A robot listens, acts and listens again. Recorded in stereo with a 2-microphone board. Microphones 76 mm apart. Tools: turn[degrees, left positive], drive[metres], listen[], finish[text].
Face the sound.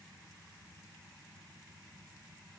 Action: listen[]
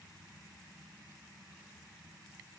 Action: listen[]
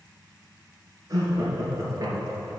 Thought: The laughter: about 45° right or 135° right.
Action: turn[-45]
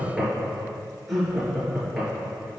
Action: finish[Found it: laughter, straight ahead.]